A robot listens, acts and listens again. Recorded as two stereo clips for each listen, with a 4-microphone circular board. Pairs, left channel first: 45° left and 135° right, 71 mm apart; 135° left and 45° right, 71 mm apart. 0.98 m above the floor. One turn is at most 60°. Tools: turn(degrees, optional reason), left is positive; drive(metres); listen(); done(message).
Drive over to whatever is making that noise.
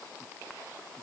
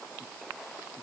listen()
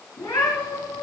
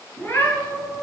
turn(degrees=60, reason="The cat meowing: 70° left.")
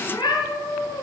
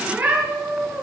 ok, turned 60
turn(degrees=30, reason="The cat meowing is now 30° left.")
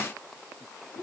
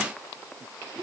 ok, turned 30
drive(metres=1.0)
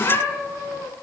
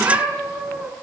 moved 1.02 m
drive(metres=1.0)
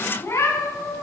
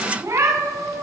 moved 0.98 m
drive(metres=1.0)
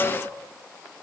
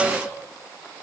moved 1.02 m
listen()
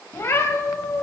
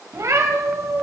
drive(metres=1.0)
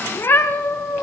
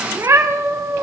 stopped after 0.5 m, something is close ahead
done("Arrived at the cat meowing, straight ahead.")